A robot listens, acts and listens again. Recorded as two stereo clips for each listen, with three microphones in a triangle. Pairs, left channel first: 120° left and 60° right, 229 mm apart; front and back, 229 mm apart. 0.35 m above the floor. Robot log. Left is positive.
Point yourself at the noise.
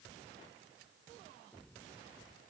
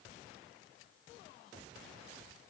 cmd idle
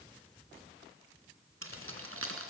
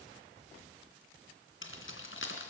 note: The keys jangling: 35° right.
cmd yaw -35
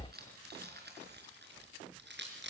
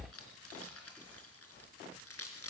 note: The keys jangling is now 20° right.
cmd yaw -20
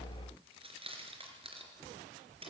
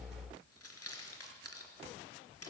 end: Facing the keys jangling, 2 to 4 m away.